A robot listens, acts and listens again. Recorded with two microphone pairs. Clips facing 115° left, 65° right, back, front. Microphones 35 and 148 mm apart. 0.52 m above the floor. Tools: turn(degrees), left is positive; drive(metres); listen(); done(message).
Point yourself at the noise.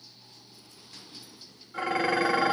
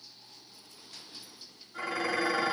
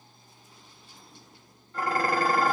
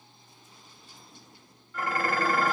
turn(degrees=130)
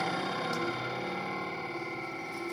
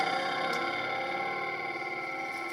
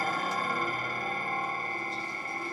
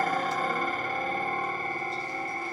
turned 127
done("Facing the dishes clattering, 1 to 2 m away.")